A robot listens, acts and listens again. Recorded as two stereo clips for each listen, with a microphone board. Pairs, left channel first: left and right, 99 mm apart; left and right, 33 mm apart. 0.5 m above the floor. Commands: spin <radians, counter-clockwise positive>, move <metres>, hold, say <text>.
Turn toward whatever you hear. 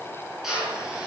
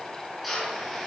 spin -0.52
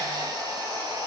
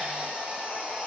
hold
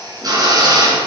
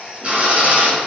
spin -2.44
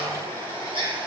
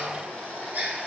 spin -1.05
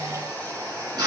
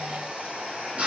spin -0.70
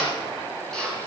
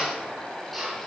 say Facing the drill, over 4 m away.